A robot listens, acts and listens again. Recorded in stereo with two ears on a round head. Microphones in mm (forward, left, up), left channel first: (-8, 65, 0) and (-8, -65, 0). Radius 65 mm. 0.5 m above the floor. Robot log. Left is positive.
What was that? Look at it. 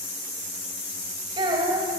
note: The child speaking: about 30° right or 150° right.
cmd yaw -30
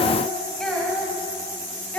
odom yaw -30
note: So it is at 10° left.
cmd yaw +10
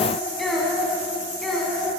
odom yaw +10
end: Found it: a child speaking, straight ahead.